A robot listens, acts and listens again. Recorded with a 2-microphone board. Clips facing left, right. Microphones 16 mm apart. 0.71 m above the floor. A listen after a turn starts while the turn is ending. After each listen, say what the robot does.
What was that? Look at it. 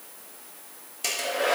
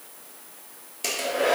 Turn 30° left.
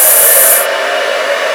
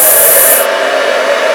Turn 30° right.
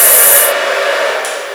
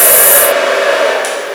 Turn 20° right.
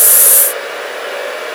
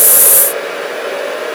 Facing the hair dryer.